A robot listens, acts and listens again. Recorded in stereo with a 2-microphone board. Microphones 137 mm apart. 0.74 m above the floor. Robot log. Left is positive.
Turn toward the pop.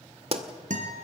note: The pop: about 45° right or 135° right.
cmd yaw -45
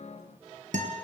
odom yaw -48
cmd idle
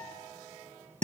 end: I heard a pop, but can't make it out now. It was about 5° left or 85° right.